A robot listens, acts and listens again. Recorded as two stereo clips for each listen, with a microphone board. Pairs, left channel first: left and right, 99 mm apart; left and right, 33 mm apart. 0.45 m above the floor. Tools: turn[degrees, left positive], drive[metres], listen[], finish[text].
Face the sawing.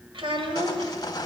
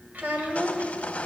Thought: The sawing: about 40° left or 140° left.
Action: turn[40]
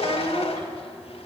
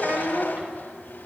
Action: listen[]
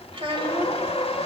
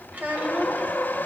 Thought: So it is at 100° left.
Action: turn[100]
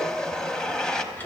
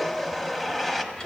Thought: The sawing is now 10° left.
Action: turn[10]
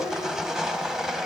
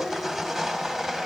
Action: finish[Found it: sawing, straight ahead, under 1 m away.]